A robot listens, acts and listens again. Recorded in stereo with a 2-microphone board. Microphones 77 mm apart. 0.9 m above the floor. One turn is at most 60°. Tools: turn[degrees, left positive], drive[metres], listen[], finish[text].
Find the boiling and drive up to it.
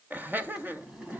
Action: turn[-30]
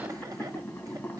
Thought: So it is at 20° left.
Action: turn[20]
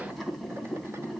Action: drive[1.0]
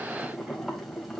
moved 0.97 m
Action: drive[1.0]
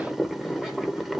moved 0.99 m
Action: drive[1.0]
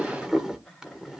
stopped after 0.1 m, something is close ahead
Thought: The boiling is now 10° right.
Action: turn[-10]
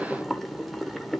Action: finish[I am next to the boiling.]